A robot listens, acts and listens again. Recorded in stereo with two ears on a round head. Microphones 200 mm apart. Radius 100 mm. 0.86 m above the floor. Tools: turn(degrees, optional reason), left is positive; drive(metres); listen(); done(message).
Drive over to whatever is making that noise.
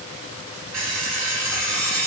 turn(degrees=-45, reason="The alarm clock: about 45° right or 135° right.")
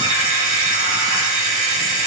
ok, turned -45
turn(degrees=-90, reason="So it is at 90° right.")
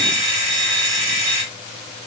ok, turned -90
turn(degrees=-30, reason="The alarm clock is now 30° right.")
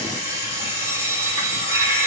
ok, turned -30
turn(degrees=-15, reason="The alarm clock is now 15° right.")
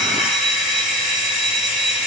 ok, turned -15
drive(metres=1.0)
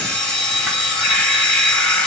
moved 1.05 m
drive(metres=1.0)
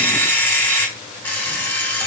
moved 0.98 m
turn(degrees=10, reason="The alarm clock is now 10° left.")
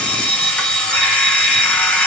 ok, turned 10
drive(metres=1.0)
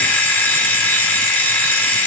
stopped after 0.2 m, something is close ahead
turn(degrees=10, reason="The alarm clock is now 10° left.")
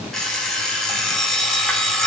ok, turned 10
done("Arrived at the alarm clock, straight ahead.")